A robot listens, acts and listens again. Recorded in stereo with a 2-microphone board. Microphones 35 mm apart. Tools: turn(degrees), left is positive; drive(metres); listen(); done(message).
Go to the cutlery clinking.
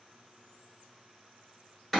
listen()
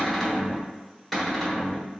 listen()
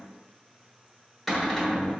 done("I can't make out cutlery clinking, only a cupboard door.")